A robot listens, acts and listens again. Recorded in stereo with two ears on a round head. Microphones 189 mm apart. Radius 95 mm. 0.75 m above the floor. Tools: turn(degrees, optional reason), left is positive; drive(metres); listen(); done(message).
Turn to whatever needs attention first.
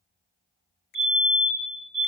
turn(degrees=-30, reason="The fire alarm: about 30° right or 150° right.")
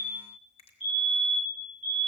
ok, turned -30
done("Found it: a fire alarm, straight ahead, over 4 m away.")